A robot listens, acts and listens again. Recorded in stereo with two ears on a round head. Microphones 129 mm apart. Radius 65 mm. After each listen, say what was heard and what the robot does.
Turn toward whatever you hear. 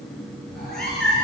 Turn 30° left.
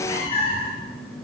So it is at 135° left. Turn 135° left.
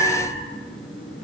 Found it: a cat meowing, straight ahead, 2 to 4 m away.